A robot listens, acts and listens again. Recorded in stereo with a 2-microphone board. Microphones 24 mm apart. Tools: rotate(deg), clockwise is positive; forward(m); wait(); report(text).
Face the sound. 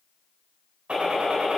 rotate(65)
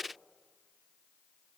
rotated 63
wait()
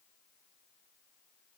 report("I heard a gunshot, but can't make it out now. It was about 5° right or 50° right.")